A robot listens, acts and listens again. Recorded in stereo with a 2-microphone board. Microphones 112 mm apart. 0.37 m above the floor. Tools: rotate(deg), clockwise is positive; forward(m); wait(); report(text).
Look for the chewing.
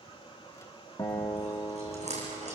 rotate(90)
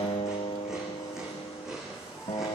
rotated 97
report("Found it: chewing, straight ahead, over 4 m away.")